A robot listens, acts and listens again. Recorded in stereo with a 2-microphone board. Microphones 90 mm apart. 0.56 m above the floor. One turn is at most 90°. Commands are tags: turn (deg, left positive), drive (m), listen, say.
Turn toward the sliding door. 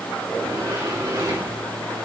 <turn deg="-40"/>
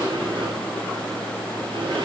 <turn deg="-90"/>
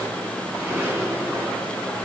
<turn deg="-25"/>
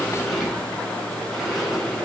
<say>Facing the sliding door.</say>